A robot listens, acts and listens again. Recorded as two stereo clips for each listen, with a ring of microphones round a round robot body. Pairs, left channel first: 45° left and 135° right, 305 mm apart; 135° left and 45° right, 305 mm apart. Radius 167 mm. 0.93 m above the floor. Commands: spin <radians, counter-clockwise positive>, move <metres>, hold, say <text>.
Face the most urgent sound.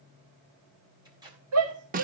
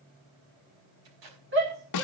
spin -1.66
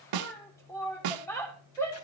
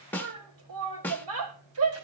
spin -0.61
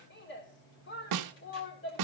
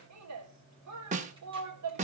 spin -0.17
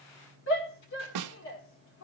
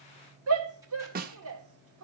say Found it: a shout, straight ahead, 2 to 4 m away.